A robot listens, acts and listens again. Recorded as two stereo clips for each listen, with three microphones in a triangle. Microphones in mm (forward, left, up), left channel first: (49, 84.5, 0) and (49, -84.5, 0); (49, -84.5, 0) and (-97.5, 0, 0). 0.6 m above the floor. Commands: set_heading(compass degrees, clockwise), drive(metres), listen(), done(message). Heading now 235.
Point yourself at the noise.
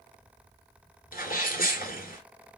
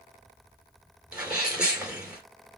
set_heading(170)
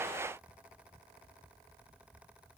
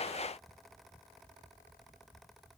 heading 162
done("I heard a sneeze from this way, but can't make it out now.")